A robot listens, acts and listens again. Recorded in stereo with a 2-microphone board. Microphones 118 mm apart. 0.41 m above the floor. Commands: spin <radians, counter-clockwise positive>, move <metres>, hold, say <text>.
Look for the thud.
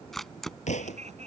spin 1.57
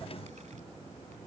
say I heard a thud from this way, but can't make it out now.